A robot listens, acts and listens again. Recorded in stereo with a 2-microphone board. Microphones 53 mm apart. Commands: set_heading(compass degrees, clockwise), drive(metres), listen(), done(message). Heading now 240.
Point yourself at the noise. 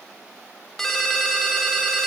set_heading(210)
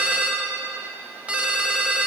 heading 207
set_heading(232)
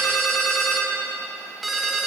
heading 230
done("Found it: a ringtone, straight ahead.")